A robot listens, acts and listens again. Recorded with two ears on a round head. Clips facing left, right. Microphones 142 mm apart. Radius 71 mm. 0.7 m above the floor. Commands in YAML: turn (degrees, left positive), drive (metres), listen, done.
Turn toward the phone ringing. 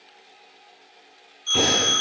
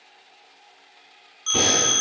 turn: -90
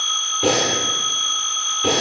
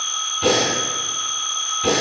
done: "Found it: a phone ringing, straight ahead, under 1 m away."